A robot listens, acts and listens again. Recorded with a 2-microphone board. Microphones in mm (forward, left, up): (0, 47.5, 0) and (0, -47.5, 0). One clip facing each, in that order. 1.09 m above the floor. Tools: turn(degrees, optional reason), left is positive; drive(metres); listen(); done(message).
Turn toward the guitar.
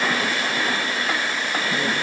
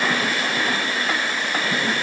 listen()
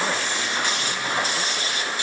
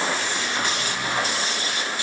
listen()
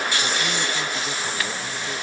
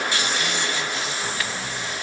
done("I can't make out a guitar.")